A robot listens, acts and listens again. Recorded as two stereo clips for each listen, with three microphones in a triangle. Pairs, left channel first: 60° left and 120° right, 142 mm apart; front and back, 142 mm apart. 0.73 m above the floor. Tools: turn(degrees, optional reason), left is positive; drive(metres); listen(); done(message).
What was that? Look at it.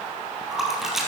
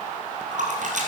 turn(degrees=150, reason="The splash: 150° left.")
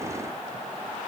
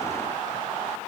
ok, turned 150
done("Facing where the splash came from. I can't hear it now.")